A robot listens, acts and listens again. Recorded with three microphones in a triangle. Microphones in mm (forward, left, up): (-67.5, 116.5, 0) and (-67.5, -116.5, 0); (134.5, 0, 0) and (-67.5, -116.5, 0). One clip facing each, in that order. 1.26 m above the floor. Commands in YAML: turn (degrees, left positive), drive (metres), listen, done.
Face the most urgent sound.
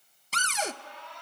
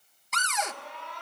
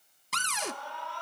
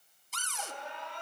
turn: -80
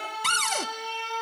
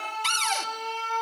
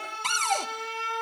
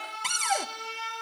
turn: 10
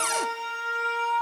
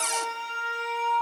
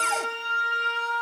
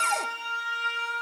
done: "Found it: an alarm, straight ahead."